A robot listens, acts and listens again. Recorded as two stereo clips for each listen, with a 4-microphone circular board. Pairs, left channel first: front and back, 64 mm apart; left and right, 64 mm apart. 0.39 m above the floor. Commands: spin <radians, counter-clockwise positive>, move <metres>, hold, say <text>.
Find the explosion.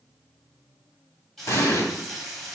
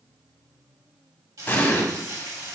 spin 0.52
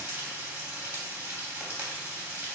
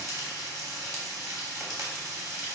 say Facing where the explosion came from. I can't hear it now.